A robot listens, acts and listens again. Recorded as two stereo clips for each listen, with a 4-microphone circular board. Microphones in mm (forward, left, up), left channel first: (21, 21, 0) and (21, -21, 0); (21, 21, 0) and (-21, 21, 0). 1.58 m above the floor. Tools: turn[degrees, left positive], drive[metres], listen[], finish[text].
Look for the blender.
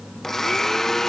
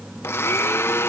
Thought: The blender: 10° left.
Action: turn[10]
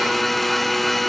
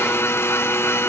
Action: finish[Facing the blender.]